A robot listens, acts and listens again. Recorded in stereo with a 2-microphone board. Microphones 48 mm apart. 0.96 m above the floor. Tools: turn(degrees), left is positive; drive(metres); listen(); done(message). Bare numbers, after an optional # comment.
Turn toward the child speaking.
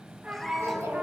# The child speaking: about 70° right or 110° right.
turn(-70)
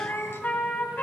listen()
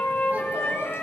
listen()
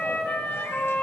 done("I heard a child speaking, but can't make it out now. It was about straight ahead or 40° right.")